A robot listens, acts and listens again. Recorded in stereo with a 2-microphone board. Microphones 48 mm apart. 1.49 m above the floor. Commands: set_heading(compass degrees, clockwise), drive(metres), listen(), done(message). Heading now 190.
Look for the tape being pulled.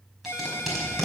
set_heading(220)
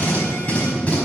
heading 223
set_heading(193)
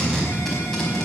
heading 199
done("Found it: tape being pulled, straight ahead, over 4 m away.")